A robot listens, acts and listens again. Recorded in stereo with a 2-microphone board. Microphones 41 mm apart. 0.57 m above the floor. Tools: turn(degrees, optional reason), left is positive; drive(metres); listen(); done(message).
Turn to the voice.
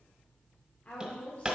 turn(degrees=35, reason="The woman speaking: about 35° left or 145° left.")
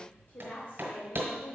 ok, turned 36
turn(degrees=100, reason="So it is at 100° left.")
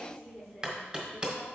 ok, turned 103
done("Facing the woman speaking, 1 to 2 m away.")